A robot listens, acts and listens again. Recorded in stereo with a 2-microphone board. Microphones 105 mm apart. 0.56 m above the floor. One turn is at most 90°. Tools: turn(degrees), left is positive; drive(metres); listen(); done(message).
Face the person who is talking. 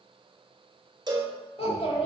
turn(degrees=70)
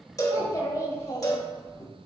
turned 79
turn(degrees=30)
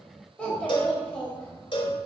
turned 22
turn(degrees=10)
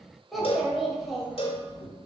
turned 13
done("Facing the child speaking.")